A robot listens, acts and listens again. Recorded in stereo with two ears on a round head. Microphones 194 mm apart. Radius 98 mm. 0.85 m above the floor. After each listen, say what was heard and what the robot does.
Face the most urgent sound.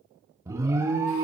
Turn 30° right.
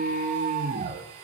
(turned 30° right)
So it is at 135° right. Turn 135° right.
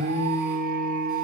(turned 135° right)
The alarm is now 45° right. Turn 45° right.
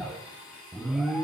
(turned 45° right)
Found it: an alarm, straight ahead, 1 to 2 m away.